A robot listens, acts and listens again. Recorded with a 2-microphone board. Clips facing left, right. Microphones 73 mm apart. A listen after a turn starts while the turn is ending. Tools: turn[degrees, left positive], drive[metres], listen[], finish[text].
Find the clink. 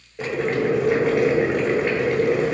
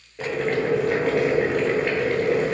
Action: listen[]
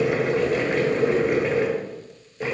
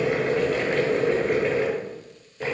Action: listen[]
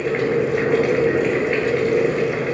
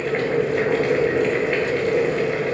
Action: finish[I can't make out a clink to turn to.]